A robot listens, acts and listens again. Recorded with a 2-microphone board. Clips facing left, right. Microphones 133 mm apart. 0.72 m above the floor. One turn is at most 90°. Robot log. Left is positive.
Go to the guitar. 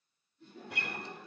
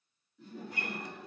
cmd yaw +90
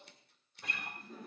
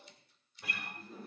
cmd fwd 1.0
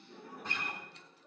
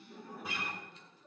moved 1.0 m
cmd fwd 1.0
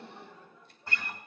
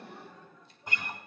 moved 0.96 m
note: The guitar is now 15° right.
cmd yaw -15
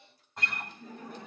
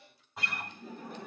cmd fwd 1.0
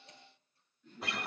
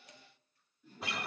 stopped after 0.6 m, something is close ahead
end: Arrived at the guitar, straight ahead.